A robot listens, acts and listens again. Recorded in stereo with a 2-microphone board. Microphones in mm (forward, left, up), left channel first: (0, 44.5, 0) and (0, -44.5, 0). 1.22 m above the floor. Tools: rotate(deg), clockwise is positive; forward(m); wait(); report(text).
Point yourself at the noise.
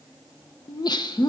rotate(-50)
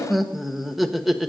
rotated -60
report("Facing the laughter.")